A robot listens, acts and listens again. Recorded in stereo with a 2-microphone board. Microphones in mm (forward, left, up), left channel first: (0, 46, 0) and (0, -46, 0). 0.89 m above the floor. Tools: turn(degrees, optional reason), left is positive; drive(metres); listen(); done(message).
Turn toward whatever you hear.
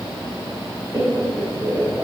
turn(degrees=-40, reason="The laughter: about 40° right or 140° right.")
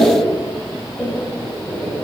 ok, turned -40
done("Facing the laughter, over 4 m away.")